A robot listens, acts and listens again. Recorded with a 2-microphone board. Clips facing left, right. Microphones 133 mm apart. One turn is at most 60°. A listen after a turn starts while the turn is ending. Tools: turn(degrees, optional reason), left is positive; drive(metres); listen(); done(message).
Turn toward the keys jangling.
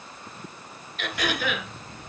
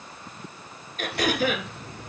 turn(degrees=-60, reason="The keys jangling: about 70° right or 110° right.")
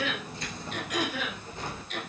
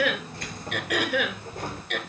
turn(degrees=-50, reason="So it is at 50° right.")
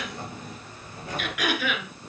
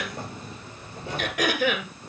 turn(degrees=-25, reason="The keys jangling is now 25° right.")
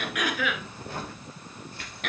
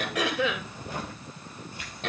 turn(degrees=-10, reason="The keys jangling is now 10° right.")
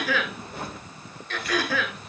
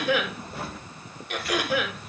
done("Facing the keys jangling.")